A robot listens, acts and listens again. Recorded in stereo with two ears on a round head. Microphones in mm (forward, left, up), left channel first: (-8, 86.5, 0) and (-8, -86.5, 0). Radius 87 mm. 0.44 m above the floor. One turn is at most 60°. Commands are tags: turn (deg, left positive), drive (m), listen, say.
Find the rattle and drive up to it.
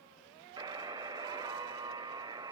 <listen/>
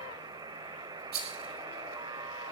<turn deg="-50"/>
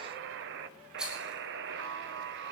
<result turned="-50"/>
<drive m="1.0"/>
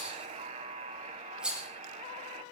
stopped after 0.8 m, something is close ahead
<say>Something is in my way. I am facing the rattle but have not reached it.</say>